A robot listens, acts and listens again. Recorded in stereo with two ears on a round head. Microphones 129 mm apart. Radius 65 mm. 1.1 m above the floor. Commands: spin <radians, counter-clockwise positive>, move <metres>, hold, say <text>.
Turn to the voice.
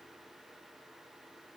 hold
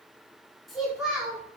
spin -0.52
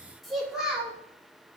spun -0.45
spin -0.52
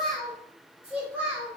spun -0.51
spin -0.52
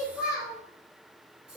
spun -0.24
spin -0.52
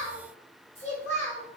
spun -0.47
spin 0.26
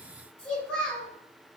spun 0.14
spin 0.17
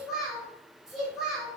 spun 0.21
say Facing the child speaking, 1 to 2 m away.